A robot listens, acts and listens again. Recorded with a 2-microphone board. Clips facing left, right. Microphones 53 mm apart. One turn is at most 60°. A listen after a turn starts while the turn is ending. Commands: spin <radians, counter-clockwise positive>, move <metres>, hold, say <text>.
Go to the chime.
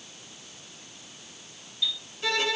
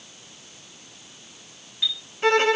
spin -0.70
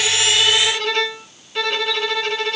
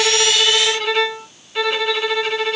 hold
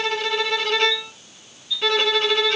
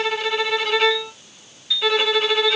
spin -1.05
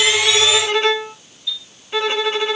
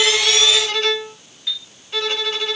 spin -1.05
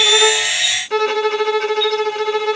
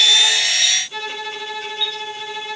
spin -0.17
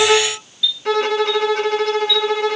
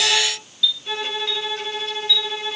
spin 0.17
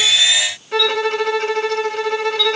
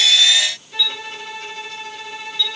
move 1.0
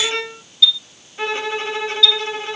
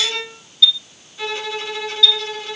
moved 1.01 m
move 1.0
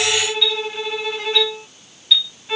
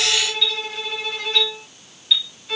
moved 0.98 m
move 1.0
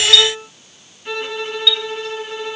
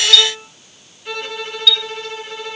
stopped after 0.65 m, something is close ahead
say Arrived at the chime, straight ahead.